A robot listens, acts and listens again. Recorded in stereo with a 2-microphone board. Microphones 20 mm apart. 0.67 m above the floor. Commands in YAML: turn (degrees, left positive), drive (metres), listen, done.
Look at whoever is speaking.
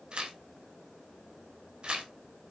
listen: true
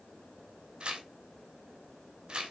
listen: true
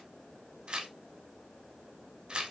done: "I can't make out anyone speaking to turn to."